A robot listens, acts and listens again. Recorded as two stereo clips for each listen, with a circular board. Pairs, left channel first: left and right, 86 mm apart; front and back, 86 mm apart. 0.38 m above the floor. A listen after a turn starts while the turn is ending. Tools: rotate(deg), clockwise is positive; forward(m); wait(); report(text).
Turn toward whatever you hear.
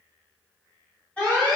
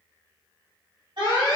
rotate(-165)
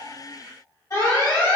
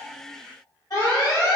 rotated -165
rotate(-45)
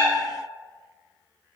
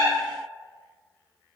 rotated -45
wait()
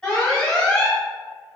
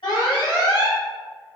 rotate(-10)
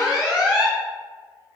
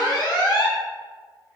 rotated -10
report("Found it: an alarm, straight ahead, 1 to 2 m away.")